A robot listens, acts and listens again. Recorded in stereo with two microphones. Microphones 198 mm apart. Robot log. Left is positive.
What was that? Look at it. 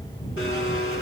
cmd yaw +90
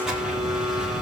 end: Facing the blender.